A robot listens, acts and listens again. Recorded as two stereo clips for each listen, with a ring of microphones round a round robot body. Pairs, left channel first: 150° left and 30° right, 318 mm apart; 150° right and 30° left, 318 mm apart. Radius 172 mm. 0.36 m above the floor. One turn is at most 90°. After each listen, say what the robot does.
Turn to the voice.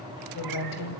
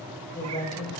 Turn 90° left.
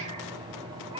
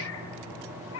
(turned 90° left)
Turn 55° left.
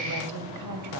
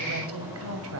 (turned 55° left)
Turn 10° right.
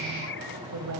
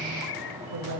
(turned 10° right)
Found it: a woman speaking, straight ahead.